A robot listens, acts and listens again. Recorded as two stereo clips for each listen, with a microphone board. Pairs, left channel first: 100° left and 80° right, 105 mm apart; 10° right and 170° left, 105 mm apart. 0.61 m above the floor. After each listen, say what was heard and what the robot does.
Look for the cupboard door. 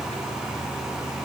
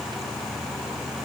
Keep listening.
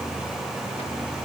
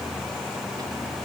Keep listening.
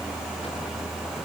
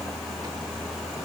I can't make out a cupboard door to turn to.